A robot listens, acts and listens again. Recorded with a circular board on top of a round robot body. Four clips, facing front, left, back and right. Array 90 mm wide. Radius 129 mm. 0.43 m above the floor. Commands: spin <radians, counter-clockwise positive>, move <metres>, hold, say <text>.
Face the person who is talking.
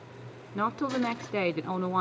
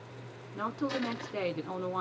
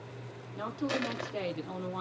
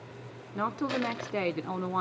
spin -0.44
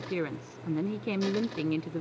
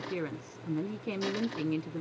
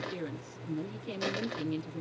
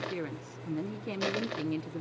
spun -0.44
say Facing the woman speaking.